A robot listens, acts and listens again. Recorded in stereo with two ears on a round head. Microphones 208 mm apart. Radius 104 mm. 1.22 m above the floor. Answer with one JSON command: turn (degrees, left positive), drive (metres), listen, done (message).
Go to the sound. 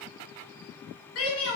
{"turn": 65}
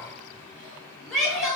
{"drive": 1.0}
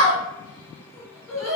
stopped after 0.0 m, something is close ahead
{"done": "Blocked. The shout is further on, straight ahead."}